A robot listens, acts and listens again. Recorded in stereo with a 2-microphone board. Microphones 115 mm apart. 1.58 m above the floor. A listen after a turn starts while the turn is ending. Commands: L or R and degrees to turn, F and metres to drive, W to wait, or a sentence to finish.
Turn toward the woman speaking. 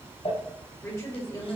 L30
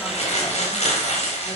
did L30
W
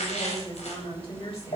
L120
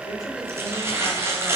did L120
W
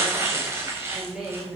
Facing the woman speaking.